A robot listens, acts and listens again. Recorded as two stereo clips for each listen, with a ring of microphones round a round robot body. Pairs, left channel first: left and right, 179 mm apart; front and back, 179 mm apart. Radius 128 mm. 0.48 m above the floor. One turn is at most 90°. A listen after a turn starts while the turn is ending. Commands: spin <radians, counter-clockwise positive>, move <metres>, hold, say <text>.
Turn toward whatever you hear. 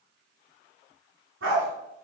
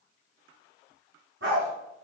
spin -1.57
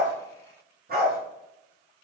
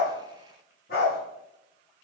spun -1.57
spin -0.96
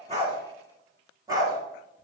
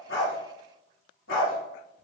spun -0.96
spin -0.35
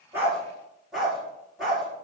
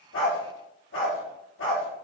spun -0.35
say Found it: a dog barking, straight ahead, 2 to 4 m away.